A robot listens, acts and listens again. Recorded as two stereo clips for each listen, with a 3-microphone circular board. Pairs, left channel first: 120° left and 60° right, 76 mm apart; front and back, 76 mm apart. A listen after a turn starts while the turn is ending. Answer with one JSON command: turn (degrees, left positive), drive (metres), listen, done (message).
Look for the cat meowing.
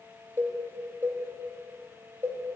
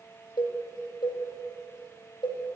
{"listen": true}
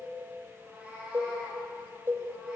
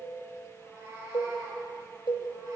{"turn": -130}
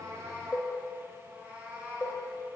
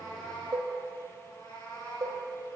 {"turn": 15}
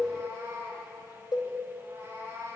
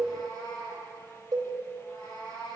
{"done": "Found it: a cat meowing, straight ahead."}